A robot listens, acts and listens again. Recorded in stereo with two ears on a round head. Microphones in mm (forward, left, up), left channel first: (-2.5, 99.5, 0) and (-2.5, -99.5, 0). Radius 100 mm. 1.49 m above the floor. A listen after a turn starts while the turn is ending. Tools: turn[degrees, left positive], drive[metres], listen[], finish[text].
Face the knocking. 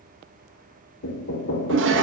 Thought: The knocking: about 50° left or 130° left.
Action: turn[50]
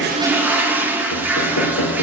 Thought: So it is at 70° left.
Action: turn[70]
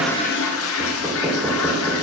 Thought: The knocking is now 15° right.
Action: turn[-15]
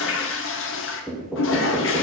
Action: finish[Found it: knocking, straight ahead.]